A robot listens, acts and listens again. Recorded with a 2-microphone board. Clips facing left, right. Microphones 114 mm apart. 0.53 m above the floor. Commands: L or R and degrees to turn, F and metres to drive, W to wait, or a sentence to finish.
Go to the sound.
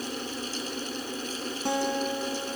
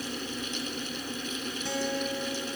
L55
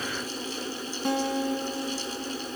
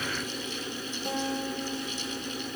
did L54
L70
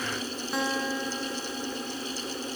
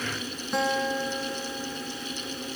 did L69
F1.0
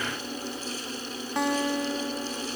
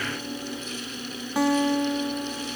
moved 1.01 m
F1.0
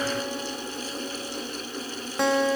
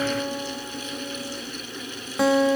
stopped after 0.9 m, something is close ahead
Arrived at the guitar, straight ahead.